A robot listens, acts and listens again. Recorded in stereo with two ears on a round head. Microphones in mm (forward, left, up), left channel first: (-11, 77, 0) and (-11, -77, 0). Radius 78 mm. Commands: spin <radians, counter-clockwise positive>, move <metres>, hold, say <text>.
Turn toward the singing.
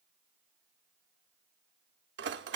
hold
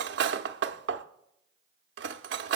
hold
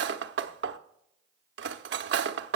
say I can't make out singing to turn to.